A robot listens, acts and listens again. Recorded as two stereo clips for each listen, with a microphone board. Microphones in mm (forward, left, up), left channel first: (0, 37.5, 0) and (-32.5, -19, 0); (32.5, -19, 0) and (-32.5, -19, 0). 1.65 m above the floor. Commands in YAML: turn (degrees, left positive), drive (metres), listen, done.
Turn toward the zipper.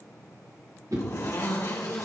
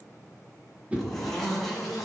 turn: 90
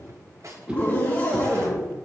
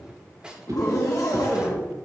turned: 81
done: "Facing the zipper, 2 to 4 m away."